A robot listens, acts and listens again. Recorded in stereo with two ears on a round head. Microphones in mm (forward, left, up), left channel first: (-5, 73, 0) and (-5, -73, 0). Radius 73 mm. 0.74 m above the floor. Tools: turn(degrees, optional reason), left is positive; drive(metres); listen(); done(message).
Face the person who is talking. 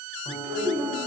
turn(degrees=-65, reason="The child speaking: about 65° right or 115° right.")
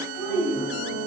turn(degrees=15, reason="So it is at 15° left.")
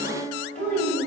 turn(degrees=15, reason="The child speaking is now 15° left.")
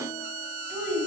turn(degrees=10, reason="The child speaking is now 10° left.")
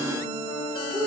turn(degrees=10, reason="The child speaking is now 10° left.")
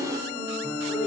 listen()
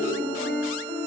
listen()
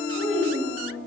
done("Found it: a child speaking, straight ahead.")